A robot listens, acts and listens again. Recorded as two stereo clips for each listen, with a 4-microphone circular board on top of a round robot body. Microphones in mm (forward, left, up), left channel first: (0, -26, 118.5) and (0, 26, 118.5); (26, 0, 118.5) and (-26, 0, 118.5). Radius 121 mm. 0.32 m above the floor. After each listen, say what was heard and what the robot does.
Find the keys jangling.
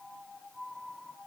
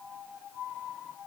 Keep listening.
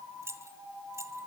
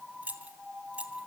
The keys jangling: 115° left. Turn 115° left.
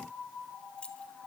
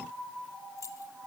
The keys jangling is now 20° right. Turn 20° right.
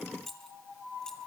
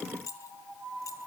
The keys jangling is now 10° right. Turn 10° right.
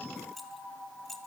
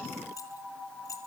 Facing the keys jangling.